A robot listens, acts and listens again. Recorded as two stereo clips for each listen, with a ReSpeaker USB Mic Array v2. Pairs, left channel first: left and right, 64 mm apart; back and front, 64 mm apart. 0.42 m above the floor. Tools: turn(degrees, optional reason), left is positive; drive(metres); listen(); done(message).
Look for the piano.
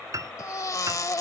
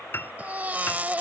turn(degrees=-125, reason="The piano: 125° right.")
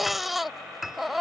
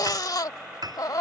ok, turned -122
done("Facing the piano.")